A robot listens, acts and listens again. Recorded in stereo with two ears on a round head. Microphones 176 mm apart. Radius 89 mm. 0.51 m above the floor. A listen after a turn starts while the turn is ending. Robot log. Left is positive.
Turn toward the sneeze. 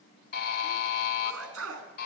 cmd yaw -90
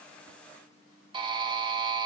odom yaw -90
end: Facing where the sneeze came from. I can't hear it now.